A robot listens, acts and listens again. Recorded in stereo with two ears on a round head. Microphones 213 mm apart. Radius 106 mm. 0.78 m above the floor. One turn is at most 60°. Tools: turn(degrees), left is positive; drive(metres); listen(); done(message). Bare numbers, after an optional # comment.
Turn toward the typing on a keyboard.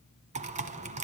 # The typing on a keyboard: about 30° right or 150° right.
turn(-30)
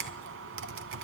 # So it is at 115° right.
turn(-60)
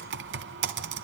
# The typing on a keyboard is now 60° right.
turn(-60)
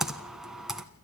done("Facing the typing on a keyboard, 1 to 2 m away.")